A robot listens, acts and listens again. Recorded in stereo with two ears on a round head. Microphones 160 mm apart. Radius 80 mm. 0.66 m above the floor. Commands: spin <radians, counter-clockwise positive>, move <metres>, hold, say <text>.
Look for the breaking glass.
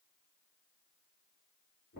hold
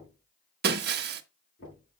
spin -1.05
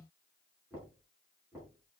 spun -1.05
hold
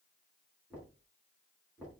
say I heard breaking glass, but can't make it out now. It was about straight ahead or 60° right.